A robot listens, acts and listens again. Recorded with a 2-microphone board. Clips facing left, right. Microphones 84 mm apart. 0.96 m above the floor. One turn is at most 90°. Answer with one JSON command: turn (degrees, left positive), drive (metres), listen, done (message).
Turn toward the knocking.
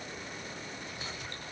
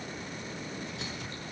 {"listen": true}
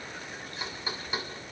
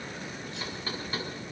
{"turn": 30}
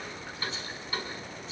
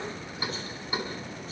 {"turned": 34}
{"turn": -15}
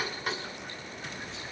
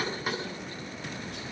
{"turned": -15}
{"done": "Facing the knocking."}